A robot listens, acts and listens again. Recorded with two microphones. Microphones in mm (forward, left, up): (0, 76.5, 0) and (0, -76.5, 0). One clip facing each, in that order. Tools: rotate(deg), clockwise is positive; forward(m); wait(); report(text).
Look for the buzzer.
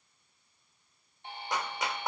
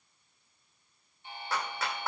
rotate(-65)
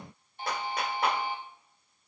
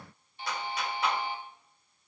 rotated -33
rotate(-50)
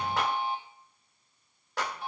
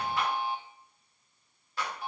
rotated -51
report("Facing the buzzer, 1 to 2 m away.")